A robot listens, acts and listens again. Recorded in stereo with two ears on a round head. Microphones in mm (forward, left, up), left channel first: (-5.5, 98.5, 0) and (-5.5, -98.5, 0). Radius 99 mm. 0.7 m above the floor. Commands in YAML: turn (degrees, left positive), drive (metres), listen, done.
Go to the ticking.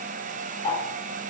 turn: 25
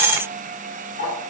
turn: 130
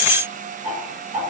turn: -20
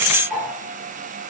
drive: 1.0
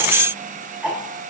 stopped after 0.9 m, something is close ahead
done: "I am next to the ticking."